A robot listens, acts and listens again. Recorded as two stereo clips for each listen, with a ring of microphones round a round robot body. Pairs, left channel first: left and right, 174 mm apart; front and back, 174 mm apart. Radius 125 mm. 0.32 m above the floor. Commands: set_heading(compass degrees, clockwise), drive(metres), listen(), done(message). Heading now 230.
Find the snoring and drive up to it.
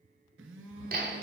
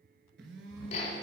set_heading(130)
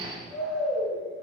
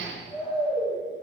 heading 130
drive(1.0)
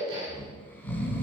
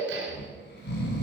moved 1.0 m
set_heading(120)
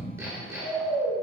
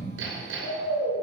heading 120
drive(1.0)
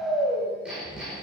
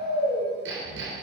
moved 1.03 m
drive(1.0)
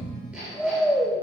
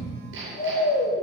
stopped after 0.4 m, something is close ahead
done("Arrived at the snoring, straight ahead.")